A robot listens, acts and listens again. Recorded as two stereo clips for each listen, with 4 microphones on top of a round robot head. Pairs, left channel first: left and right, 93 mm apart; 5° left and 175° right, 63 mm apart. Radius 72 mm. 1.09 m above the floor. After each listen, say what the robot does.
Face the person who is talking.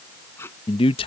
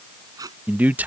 Turn 120° left.
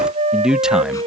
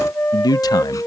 Found it: a man speaking, straight ahead.